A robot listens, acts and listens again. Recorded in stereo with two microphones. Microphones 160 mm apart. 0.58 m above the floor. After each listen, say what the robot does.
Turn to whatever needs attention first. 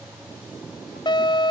Turn 30° left.
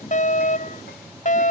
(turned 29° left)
Turn 120° left.
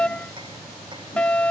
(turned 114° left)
Found it: a fire alarm, straight ahead.